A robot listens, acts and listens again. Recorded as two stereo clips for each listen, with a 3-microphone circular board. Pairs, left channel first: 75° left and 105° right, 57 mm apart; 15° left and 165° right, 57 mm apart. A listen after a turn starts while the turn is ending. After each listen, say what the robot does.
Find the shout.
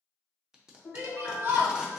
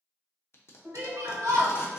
Turn 150° right.
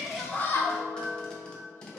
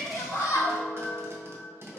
Turn 25° left.
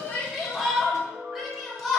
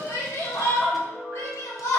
Turn 15° right.
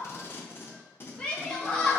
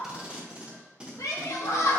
Found it: a shout, straight ahead, 1 to 2 m away.